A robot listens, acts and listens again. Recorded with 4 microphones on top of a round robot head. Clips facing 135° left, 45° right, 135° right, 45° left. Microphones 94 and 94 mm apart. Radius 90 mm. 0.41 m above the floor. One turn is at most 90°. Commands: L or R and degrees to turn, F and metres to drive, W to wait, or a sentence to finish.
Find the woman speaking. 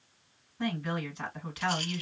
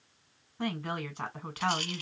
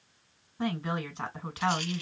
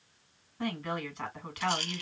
R75
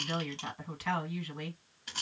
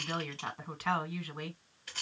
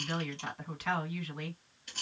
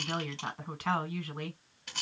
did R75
Found it: a woman speaking, straight ahead, 1 to 2 m away.